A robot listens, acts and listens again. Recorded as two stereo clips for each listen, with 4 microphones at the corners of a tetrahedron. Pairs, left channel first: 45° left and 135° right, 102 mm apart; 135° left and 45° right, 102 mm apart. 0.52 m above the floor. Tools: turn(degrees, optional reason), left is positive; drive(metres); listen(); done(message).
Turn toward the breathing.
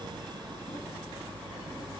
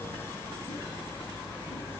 listen()
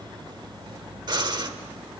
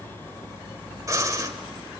turn(degrees=-95, reason="The breathing: 95° right.")
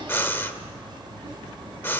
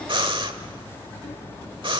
turn(degrees=-20, reason="The breathing is now 20° right.")
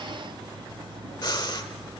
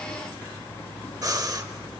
done("Facing the breathing, 1 to 2 m away.")